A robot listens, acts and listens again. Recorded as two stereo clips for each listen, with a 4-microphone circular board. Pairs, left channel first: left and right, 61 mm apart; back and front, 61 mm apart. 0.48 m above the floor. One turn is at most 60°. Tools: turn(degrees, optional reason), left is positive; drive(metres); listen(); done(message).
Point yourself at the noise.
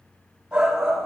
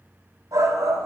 turn(degrees=-10, reason="The shout: 10° right.")
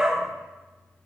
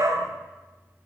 done("Facing the shout, 2 to 4 m away.")